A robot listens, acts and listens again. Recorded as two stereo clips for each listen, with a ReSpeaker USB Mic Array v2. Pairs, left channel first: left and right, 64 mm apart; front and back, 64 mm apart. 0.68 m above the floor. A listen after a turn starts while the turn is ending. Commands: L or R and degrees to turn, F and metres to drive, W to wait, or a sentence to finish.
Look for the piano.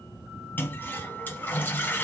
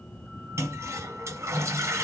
W
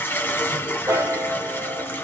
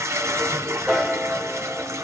R100
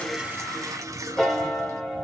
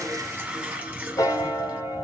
Found it: a piano, straight ahead, 1 to 2 m away.